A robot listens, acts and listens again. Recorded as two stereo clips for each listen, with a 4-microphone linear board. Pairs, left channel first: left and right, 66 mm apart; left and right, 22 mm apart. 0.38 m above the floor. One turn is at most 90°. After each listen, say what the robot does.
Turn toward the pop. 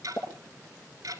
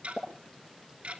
Turn 90° left.
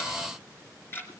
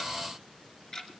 Facing where the pop came from. I can't hear it now.